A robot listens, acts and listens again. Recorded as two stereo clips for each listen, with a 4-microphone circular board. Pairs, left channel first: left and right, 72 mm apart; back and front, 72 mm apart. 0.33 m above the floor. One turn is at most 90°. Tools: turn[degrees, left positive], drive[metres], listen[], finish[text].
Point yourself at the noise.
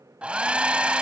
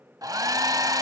Thought: The hair dryer: 15° right.
Action: turn[-15]
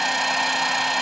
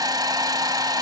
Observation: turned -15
Action: finish[Found it: a hair dryer, straight ahead.]